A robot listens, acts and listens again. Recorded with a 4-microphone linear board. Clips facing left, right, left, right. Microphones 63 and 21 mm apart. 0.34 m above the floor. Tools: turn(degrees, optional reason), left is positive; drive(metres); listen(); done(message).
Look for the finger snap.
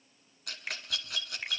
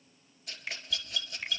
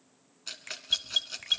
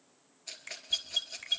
turn(degrees=20, reason="The finger snap: about 20° left or 160° left.")
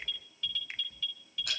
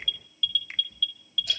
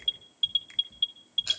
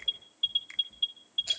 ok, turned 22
done("Facing the finger snap, 2 to 4 m away.")